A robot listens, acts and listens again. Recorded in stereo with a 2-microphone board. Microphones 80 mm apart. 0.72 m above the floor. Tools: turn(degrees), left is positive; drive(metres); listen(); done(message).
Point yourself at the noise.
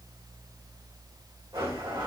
turn(degrees=-90)
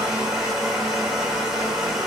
done("Facing the blender.")